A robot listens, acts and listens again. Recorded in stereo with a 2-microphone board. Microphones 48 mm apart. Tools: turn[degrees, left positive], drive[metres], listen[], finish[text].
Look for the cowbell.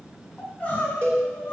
Thought: The cowbell: about 60° right or 120° right.
Action: turn[-60]
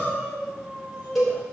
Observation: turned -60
Action: finish[Facing the cowbell.]